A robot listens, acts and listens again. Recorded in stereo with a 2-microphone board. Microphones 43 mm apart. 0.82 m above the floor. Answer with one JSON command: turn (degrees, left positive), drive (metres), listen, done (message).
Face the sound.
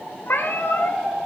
{"turn": 70}
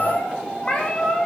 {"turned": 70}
{"turn": 15}
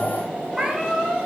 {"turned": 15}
{"turn": -10}
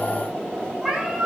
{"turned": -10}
{"turn": -10}
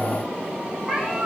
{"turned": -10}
{"turn": -10}
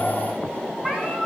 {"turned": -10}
{"done": "Facing the cat meowing."}